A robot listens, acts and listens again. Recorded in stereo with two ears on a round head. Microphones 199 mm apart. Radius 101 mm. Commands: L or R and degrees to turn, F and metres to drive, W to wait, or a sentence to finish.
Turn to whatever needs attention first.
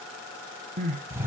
R35
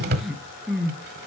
Found it: crying, straight ahead, 1 to 2 m away.